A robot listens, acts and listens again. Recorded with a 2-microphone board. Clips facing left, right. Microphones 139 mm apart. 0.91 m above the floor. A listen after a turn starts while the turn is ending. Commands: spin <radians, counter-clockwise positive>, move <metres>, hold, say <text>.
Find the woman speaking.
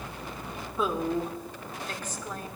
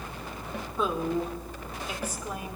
spin -0.52
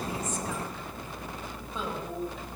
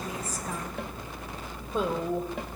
spin -2.18
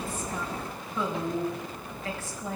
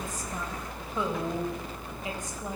spin -0.26
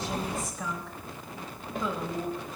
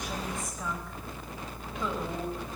say Facing the woman speaking, over 4 m away.